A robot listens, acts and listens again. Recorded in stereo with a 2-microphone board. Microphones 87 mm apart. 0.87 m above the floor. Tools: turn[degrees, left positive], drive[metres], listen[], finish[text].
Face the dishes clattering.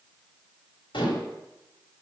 Action: turn[90]
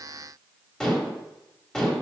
Thought: So it is at 10° left.
Action: turn[10]
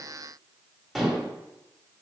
Action: finish[Facing the dishes clattering.]